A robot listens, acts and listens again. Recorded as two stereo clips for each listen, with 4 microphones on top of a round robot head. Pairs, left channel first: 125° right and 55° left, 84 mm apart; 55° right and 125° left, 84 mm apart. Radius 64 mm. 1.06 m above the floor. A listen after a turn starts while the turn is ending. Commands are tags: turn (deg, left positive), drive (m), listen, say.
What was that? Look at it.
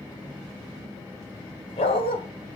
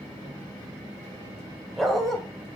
<turn deg="-140"/>
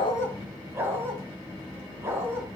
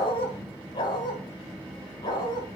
<turn deg="-10"/>
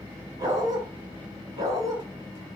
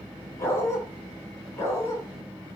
<say>Found it: a dog barking, straight ahead, over 4 m away.</say>